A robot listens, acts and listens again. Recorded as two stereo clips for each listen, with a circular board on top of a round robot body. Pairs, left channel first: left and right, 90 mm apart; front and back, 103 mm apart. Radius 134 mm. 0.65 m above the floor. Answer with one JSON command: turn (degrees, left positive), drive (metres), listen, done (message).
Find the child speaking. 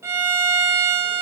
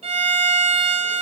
{"listen": true}
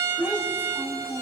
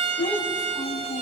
{"turn": 20}
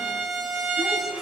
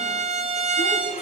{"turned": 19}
{"listen": true}
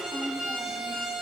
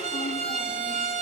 {"listen": true}
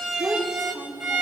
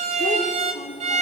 {"turn": -15}
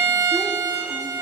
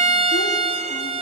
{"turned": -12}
{"listen": true}
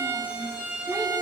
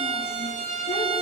{"listen": true}
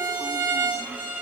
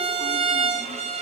{"done": "I heard a child speaking from this way, but can't make it out now."}